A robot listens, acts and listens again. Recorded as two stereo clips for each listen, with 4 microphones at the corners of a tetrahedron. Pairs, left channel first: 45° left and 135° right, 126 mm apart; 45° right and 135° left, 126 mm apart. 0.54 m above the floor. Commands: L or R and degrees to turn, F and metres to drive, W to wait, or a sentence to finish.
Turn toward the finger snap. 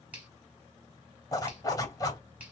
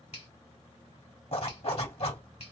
R60
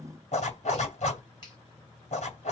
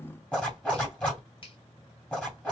Found it: a finger snap, straight ahead, 1 to 2 m away.